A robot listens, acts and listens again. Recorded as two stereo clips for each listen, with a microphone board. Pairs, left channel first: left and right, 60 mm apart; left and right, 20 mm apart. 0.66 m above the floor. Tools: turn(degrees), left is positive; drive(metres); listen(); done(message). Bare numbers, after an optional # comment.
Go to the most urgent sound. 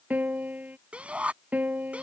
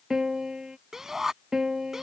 # The shout: about 20° right or 160° right.
turn(-20)
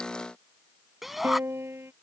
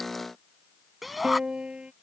drive(1.0)
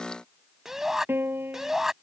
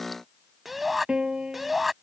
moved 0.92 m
drive(1.0)
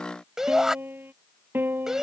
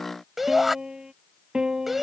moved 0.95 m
drive(1.0)
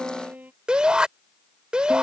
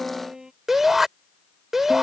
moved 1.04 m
# The shout is now 15° right.
turn(-15)
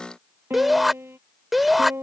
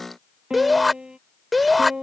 drive(1.0)
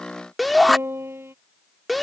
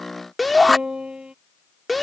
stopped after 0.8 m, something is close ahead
done("Arrived at the shout, straight ahead.")